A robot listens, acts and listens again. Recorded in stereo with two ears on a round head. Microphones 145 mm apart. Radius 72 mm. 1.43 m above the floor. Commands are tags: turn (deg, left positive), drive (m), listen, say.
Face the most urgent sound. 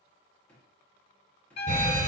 <turn deg="-50"/>
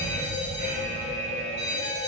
<turn deg="-65"/>
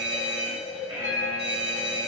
<turn deg="-15"/>
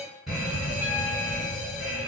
<say>Found it: a fire alarm, straight ahead, 1 to 2 m away.</say>